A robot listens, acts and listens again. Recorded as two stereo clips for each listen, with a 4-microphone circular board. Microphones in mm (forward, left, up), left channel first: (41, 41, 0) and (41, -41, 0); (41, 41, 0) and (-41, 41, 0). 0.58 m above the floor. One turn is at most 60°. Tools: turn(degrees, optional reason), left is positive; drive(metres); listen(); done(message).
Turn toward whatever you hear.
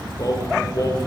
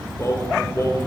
turn(degrees=50, reason="The singing: 50° left.")
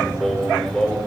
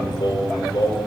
done("Facing the singing, 1 to 2 m away.")